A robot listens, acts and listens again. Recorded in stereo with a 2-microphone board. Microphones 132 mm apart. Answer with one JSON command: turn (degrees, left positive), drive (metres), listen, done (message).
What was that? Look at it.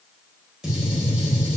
{"turn": -30}
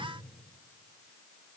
{"listen": true}
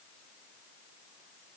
{"done": "I heard a gunshot, but can't make it out now. It was about 25° left or 145° right."}